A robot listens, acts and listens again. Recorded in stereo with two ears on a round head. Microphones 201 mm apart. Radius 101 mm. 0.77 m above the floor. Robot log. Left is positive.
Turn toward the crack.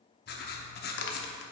note: The crack: about 55° left or 125° left.
cmd yaw +55
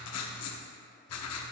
cmd idle
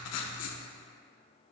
end: I heard a crack, but can't make it out now. It was about straight ahead or 70° left.